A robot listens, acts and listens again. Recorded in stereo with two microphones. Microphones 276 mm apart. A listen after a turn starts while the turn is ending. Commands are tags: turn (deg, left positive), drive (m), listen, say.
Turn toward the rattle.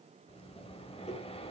<listen/>
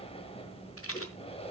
<turn deg="55"/>
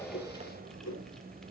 <listen/>
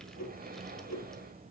<listen/>
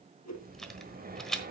<say>Facing the rattle.</say>